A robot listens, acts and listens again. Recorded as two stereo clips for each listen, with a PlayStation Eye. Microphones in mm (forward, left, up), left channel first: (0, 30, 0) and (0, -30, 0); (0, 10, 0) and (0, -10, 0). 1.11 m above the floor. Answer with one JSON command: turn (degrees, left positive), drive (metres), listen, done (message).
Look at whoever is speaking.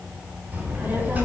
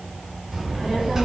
{"turn": -25}
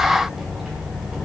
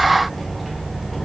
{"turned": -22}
{"done": "Found it: a child speaking, straight ahead."}